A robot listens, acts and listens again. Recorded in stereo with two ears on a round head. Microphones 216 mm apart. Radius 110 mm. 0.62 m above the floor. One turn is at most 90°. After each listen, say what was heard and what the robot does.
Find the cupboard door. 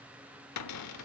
Turn 90° left.
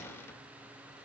So it is at 10° left. Turn 10° left.
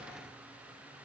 Keep listening.
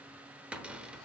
Facing the cupboard door, under 1 m away.